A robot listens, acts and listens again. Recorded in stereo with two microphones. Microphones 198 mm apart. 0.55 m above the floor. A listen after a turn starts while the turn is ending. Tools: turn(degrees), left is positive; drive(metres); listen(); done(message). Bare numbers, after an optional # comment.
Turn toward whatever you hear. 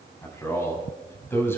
turn(30)
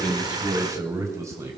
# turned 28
# So it is at 15° right.
turn(-15)
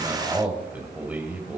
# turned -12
# The man speaking is now 10° right.
turn(-10)
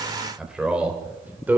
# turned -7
# The man speaking is now 10° right.
turn(-10)
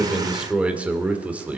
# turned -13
done("Facing the man speaking, 2 to 4 m away.")